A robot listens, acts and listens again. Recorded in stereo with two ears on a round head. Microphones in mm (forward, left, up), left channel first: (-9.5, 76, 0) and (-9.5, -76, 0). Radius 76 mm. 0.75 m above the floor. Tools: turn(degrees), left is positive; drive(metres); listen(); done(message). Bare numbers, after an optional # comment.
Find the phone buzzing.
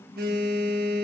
# The phone buzzing: about 55° right or 125° right.
turn(-55)
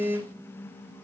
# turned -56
# So it is at 15° right.
turn(-15)
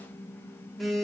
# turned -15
done("Facing the phone buzzing, 1 to 2 m away.")